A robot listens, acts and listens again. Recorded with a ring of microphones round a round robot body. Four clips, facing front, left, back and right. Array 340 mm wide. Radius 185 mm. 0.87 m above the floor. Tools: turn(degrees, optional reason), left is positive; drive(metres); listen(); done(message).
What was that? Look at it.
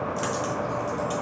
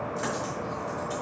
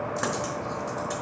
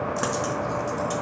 turn(degrees=-100, reason="The dropped coin: 100° right.")
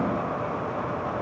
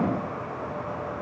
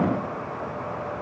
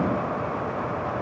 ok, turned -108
done("I heard a dropped coin from this way, but can't make it out now.")